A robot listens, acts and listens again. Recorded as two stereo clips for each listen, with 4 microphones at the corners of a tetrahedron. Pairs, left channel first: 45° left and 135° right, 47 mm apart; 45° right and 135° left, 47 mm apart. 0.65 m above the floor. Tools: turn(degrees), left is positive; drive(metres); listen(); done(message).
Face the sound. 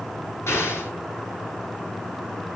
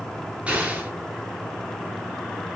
turn(degrees=70)
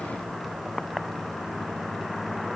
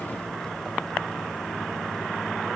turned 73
done("I heard an explosion from this way, but can't make it out now.")